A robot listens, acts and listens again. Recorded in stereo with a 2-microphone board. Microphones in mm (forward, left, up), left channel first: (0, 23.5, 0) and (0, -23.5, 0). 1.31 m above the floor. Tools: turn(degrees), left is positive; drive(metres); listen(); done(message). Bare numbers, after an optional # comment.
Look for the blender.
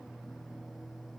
listen()
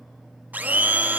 # The blender: about 35° right or 145° right.
turn(-35)
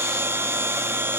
# So it is at 100° right.
turn(-100)
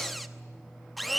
done("Facing the blender, 1 to 2 m away.")